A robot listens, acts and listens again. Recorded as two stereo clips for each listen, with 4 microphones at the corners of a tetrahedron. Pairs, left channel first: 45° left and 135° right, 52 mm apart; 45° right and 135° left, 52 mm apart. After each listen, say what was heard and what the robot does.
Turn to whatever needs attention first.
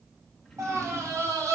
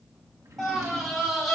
The scream: 140° right. Turn 140° right.
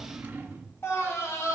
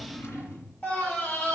The scream is now 15° left. Turn 15° left.
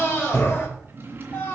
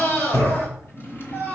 Found it: a scream, straight ahead, 2 to 4 m away.